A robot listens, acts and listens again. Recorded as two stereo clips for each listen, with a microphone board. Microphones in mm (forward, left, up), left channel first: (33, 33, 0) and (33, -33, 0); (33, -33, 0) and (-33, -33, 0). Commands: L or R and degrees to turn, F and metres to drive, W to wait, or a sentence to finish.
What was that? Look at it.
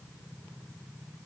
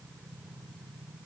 W
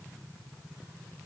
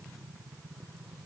W
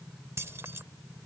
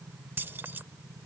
R125
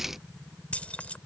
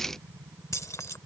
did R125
L25
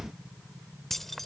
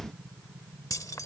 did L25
Facing the keys jangling.